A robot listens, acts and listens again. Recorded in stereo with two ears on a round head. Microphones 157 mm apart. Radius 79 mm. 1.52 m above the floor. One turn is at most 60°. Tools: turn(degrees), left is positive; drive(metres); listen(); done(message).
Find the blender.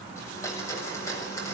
turn(degrees=20)
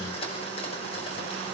turn(degrees=60)
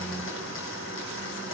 turn(degrees=60)
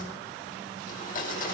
turn(degrees=50)
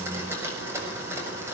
turn(degrees=-15)
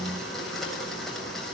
done("Facing the blender, over 4 m away.")